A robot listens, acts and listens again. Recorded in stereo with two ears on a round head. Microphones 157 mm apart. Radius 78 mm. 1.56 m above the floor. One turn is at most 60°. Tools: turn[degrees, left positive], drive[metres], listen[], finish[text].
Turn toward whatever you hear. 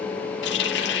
Thought: The running tap: about 70° left or 110° left.
Action: turn[60]
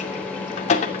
Thought: So it is at 40° left.
Action: turn[40]
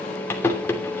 Thought: The running tap is now 15° left.
Action: turn[15]
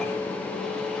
Action: listen[]
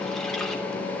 Action: listen[]
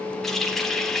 Action: finish[Facing the running tap.]